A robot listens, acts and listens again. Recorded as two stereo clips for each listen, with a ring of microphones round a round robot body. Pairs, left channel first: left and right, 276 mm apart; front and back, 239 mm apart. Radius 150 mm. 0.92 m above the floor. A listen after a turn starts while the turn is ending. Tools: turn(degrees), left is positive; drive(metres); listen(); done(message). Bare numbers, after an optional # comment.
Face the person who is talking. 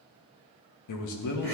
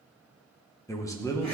# The man speaking: 80° left.
turn(80)
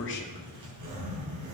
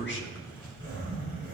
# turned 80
listen()
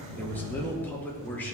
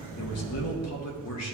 done("Found it: a man speaking, straight ahead.")